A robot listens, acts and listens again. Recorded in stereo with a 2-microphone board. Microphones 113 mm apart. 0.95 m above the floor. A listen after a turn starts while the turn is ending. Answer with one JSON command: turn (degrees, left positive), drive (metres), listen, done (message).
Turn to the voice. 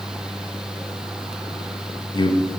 {"turn": 45}
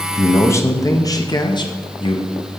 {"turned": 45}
{"turn": 50}
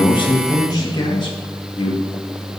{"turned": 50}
{"turn": 45}
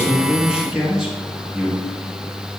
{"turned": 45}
{"done": "Found it: a man speaking, straight ahead."}